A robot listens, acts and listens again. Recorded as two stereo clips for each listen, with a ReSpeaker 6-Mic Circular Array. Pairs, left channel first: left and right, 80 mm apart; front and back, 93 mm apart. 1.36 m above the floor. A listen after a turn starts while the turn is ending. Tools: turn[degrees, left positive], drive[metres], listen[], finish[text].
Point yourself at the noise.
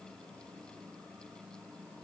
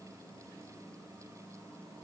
Action: listen[]
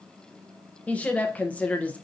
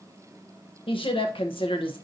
Thought: The woman speaking: 15° left.
Action: turn[15]
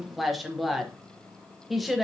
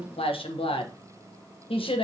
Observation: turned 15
Action: finish[Found it: a woman speaking, straight ahead.]